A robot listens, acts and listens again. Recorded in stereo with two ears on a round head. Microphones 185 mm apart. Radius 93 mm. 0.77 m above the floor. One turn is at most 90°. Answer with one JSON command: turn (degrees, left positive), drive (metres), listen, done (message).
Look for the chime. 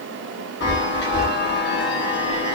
{"turn": 55}
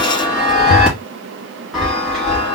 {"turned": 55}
{"done": "Facing the chime."}